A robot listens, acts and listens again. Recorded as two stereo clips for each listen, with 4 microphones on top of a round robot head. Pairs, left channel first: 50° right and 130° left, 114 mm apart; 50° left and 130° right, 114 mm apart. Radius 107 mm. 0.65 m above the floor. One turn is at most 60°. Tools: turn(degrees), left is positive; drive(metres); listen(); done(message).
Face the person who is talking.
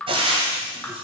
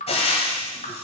listen()
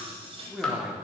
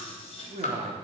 turn(degrees=-60)
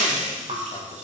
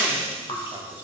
turn(degrees=-60)
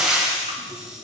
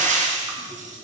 turn(degrees=-25)
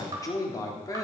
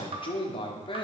turn(degrees=10)
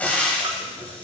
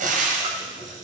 listen()
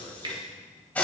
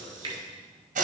listen()
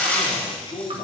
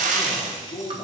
done("Found it: a man speaking, straight ahead, 1 to 2 m away.")